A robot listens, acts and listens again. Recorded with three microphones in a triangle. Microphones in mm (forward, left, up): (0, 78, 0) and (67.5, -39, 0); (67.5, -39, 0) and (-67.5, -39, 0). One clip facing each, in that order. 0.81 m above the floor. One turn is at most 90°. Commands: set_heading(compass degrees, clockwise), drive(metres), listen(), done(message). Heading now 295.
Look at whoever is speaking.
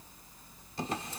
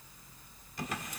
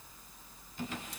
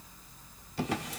listen()
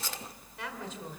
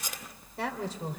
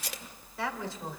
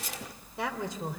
set_heading(25)
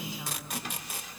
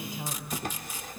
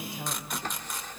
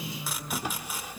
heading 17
set_heading(37)
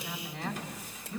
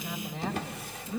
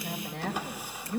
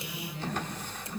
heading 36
done("Facing the woman speaking, 2 to 4 m away.")